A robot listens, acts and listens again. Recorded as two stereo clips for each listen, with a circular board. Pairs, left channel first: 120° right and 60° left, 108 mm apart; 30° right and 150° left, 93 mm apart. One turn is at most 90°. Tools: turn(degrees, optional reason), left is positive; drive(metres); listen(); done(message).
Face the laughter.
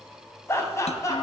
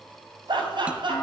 turn(degrees=90, reason="The laughter: straight behind.")
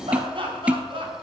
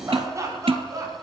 turn(degrees=90, reason="The laughter is now 95° left.")
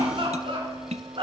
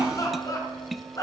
turn(degrees=25, reason="The laughter is now 25° left.")
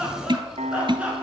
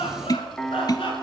turn(degrees=-20, reason="The laughter is now 20° right.")
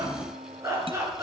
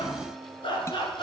done("Facing the laughter, over 4 m away.")